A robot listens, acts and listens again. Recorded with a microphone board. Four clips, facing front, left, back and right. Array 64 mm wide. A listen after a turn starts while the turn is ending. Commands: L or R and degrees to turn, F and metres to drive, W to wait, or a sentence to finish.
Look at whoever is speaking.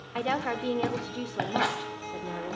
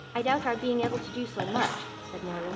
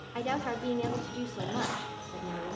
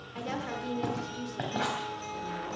L70
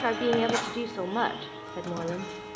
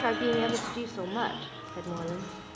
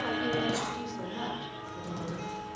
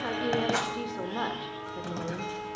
L10
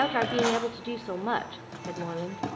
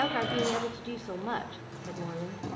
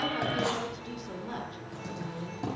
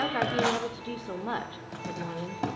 Found it: a woman speaking, straight ahead, 1 to 2 m away.